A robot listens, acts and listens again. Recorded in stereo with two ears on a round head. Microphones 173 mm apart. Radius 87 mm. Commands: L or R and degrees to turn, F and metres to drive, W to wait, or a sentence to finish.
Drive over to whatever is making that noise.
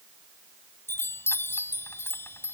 L30
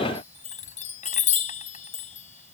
L140
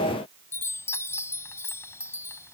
L15
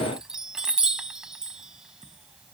F1.0
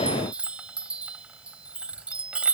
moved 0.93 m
F1.0
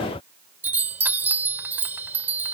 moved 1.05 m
R10
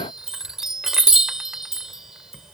F1.0
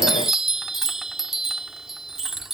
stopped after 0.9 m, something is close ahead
Arrived at the chime, straight ahead.